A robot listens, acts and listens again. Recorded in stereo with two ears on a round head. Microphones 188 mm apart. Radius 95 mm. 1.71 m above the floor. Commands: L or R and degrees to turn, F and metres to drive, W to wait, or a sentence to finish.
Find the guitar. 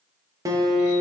R15
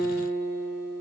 R150
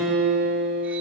Facing the guitar, 2 to 4 m away.